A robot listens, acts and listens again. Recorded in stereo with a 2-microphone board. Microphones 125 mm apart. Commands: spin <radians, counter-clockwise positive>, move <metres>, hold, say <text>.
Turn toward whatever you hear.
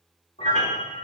spin 1.13
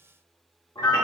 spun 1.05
spin 0.61
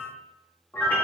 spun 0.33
spin 0.26
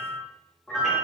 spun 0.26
say Facing the piano.